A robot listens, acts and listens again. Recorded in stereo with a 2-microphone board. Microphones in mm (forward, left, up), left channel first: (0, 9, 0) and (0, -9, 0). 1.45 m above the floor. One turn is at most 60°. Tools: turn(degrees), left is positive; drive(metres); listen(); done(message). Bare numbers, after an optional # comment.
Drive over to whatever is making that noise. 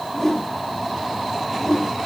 # The whoosh: about 20° left or 160° left.
turn(20)
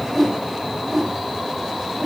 drive(1.0)
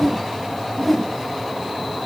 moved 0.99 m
drive(1.0)
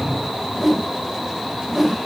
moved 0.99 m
drive(1.0)
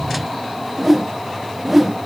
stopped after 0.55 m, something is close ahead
# The whoosh is now 10° right.
turn(-10)
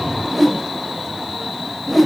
done("I am next to the whoosh.")